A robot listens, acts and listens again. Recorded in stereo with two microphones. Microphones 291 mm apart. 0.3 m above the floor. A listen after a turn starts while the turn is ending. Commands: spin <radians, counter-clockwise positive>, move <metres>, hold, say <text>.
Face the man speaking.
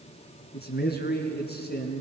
spin 0.61
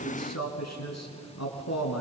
spin 1.92
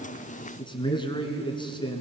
spin 0.26
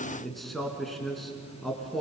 say Facing the man speaking, 2 to 4 m away.